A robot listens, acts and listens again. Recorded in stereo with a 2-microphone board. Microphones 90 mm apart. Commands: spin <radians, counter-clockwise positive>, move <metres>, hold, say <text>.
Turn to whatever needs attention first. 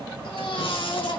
spin 1.57
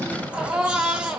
spin -0.17
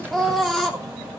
say Facing the baby crying.